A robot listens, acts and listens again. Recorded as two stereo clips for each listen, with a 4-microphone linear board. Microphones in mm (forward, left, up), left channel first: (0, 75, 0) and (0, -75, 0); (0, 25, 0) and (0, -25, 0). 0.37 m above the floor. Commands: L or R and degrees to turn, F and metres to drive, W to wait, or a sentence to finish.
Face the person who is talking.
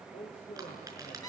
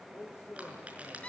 L50
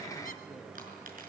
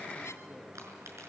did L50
W
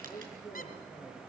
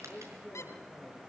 Found it: a man speaking, straight ahead.